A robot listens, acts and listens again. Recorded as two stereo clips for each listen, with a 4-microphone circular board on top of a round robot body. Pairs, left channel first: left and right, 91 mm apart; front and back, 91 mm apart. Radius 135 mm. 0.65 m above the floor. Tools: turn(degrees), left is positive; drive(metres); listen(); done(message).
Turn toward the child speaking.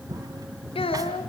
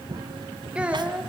turn(degrees=100)
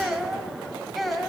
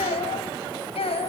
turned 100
done("Facing the child speaking.")